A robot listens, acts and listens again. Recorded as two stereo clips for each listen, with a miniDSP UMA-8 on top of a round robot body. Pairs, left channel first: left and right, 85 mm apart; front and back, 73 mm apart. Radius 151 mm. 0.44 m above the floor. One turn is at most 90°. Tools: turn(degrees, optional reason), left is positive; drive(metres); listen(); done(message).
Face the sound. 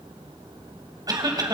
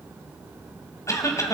turn(degrees=-45, reason="The cough: 45° right.")
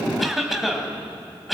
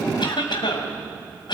done("Found it: a cough, straight ahead.")